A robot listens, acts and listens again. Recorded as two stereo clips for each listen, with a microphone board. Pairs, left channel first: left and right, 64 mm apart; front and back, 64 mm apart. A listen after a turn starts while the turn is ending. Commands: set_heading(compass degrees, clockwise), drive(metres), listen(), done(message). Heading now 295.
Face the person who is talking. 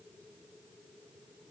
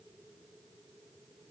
listen()
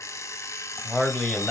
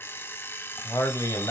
set_heading(285)
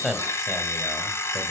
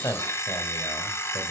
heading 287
listen()
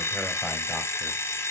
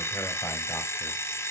listen()
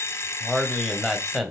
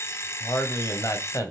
done("Facing the man speaking, 1 to 2 m away.")